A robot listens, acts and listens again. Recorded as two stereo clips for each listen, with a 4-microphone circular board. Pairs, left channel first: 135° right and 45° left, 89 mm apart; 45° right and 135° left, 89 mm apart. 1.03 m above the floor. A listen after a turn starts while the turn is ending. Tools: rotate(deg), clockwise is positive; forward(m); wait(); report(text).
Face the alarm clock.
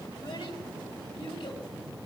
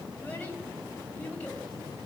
wait()
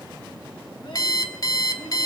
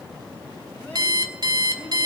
rotate(-175)
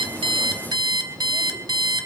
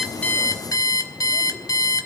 report("Facing the alarm clock, 1 to 2 m away.")